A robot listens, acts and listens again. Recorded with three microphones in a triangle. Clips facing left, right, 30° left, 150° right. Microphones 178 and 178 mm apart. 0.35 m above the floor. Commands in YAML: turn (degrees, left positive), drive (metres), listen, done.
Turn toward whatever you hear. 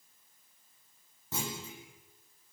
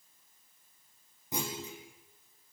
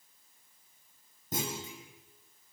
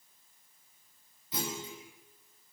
turn: -15
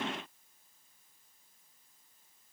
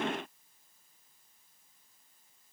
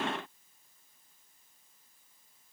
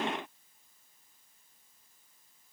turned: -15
done: "Facing where the clunk came from. I can't hear it now."